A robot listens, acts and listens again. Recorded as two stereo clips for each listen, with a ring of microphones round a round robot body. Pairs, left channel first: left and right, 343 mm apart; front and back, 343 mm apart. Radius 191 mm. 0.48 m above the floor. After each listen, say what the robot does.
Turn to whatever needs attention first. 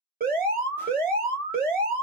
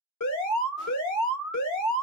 Turn 25° right.
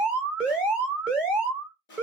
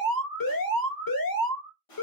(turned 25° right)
Facing the alarm, 1 to 2 m away.